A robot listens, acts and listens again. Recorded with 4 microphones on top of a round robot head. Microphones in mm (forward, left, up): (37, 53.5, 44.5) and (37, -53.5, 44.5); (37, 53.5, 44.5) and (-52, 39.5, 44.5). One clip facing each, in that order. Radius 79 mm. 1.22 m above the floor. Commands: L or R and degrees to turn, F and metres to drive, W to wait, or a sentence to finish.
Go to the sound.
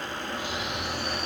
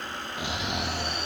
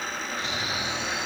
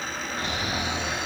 R125
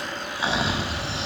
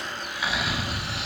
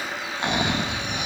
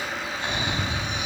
L25
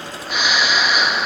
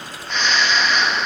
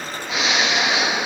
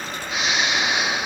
L10
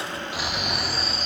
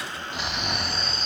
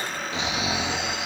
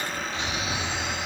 F1.0
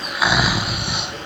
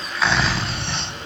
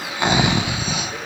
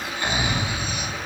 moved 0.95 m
L10
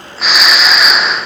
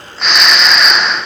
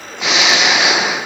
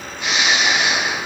F1.0
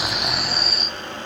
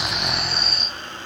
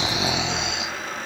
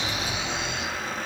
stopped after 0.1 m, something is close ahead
I am next to the snoring.